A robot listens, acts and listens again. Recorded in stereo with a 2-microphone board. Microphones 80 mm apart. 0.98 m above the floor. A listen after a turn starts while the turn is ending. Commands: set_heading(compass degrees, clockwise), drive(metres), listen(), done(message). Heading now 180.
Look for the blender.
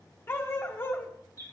listen()
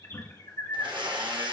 set_heading(270)
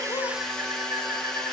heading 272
set_heading(262)
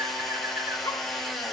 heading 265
done("Facing the blender, 1 to 2 m away.")